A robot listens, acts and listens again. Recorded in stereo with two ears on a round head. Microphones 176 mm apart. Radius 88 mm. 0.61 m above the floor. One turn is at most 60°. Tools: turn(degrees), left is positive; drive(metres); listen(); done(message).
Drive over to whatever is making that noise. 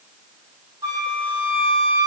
turn(degrees=-20)
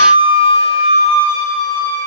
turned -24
turn(degrees=-60)
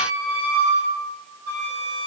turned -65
turn(degrees=-60)
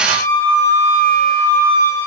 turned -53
turn(degrees=-20)
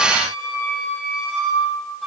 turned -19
drive(metres=1.0)
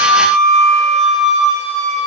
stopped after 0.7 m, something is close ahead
done("Something is in my way. I am facing the flute but have not reached it.")